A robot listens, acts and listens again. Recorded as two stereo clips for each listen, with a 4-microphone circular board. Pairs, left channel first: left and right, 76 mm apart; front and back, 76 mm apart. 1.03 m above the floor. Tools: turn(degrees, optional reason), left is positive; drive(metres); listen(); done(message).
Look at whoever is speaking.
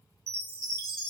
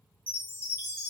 listen()
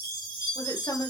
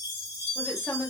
turn(degrees=85, reason="The woman speaking: 85° left.")
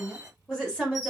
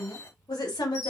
turn(degrees=10, reason="The woman speaking is now 10° left.")
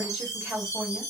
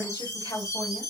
done("Found it: a woman speaking, straight ahead, 2 to 4 m away.")